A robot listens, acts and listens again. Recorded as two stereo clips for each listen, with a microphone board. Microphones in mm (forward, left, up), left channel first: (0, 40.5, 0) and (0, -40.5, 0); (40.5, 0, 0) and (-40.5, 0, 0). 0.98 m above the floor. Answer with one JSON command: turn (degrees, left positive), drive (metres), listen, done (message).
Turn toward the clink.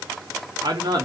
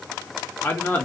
{"listen": true}
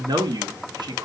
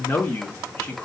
{"listen": true}
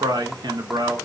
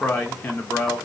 {"done": "I can't make out a clink to turn to."}